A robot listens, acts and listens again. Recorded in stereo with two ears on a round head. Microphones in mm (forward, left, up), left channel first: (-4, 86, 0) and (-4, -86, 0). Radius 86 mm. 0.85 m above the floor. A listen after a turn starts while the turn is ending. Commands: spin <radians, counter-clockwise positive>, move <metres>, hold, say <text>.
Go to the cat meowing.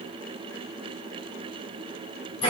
hold
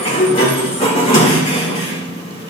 hold
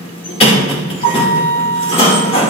say I can't make out a cat meowing, only a sliding door.